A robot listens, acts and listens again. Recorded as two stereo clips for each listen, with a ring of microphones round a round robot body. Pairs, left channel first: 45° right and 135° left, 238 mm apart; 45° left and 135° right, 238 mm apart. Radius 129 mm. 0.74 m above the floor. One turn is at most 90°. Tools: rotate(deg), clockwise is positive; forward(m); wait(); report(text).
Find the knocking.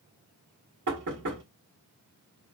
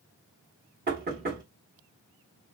rotate(-90)
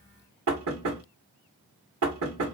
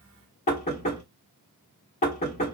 rotate(-90)
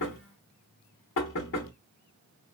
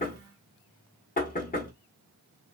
rotate(10)
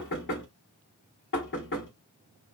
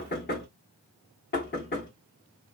report("Facing the knocking, 1 to 2 m away.")